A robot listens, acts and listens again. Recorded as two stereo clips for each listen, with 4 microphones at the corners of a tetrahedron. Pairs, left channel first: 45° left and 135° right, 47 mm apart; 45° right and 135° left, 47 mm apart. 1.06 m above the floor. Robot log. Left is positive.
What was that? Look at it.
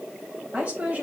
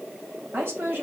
note: The woman speaking: 175° left.
cmd yaw +175
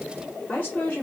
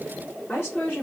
end: Found it: a woman speaking, straight ahead.